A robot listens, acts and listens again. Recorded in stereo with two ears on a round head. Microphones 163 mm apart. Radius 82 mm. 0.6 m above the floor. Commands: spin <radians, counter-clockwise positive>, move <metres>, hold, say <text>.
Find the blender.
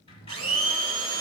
spin -1.57
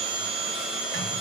say Facing the blender, under 1 m away.